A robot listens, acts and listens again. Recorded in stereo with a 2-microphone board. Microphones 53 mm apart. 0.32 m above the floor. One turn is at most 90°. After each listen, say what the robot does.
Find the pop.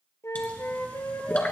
Turn 30° left.
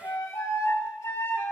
Keep listening.
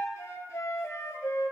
I heard a pop, but can't make it out now. It was about straight ahead or 120° left.